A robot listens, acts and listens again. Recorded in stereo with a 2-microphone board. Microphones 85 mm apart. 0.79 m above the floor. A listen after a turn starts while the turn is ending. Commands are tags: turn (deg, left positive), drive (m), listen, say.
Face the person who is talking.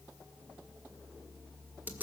<listen/>
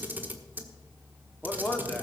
<turn deg="30"/>
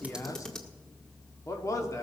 <turn deg="135"/>
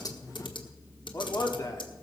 <turn deg="50"/>
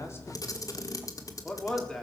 <turn deg="10"/>
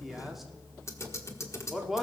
<say>Found it: a man speaking, straight ahead.</say>